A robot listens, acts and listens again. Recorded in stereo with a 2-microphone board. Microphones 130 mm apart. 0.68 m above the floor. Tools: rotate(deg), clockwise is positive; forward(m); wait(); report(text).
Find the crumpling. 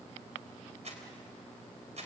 rotate(60)
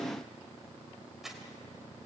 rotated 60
report("Facing the crumpling, 2 to 4 m away.")